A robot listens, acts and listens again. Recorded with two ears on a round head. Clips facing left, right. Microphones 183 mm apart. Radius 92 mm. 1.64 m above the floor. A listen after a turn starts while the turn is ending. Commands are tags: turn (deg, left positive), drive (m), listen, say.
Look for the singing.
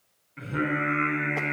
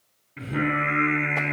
<turn deg="-90"/>
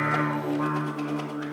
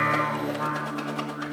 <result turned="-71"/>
<turn deg="-20"/>
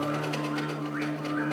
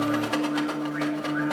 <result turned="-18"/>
<say>Facing the singing.</say>